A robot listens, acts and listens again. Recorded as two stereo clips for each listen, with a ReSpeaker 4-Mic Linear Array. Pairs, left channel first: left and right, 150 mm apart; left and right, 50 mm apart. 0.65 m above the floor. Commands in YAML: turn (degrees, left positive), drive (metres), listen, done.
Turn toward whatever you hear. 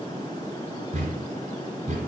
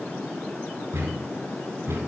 turn: -50
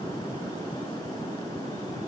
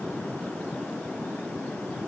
listen: true
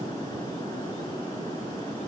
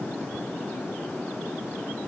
done: "I heard a thud, but can't make it out now. It was about straight ahead or 80° right."